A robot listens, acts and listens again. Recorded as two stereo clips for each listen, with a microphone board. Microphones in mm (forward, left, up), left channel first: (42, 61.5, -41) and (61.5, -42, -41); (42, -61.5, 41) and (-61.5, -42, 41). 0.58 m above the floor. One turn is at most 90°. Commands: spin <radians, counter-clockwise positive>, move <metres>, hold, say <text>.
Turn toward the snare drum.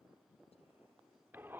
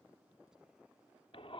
hold
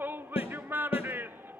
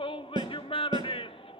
spin 1.57
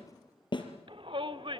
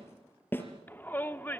spin 1.05
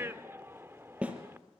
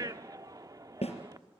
say Found it: a snare drum, straight ahead, 2 to 4 m away.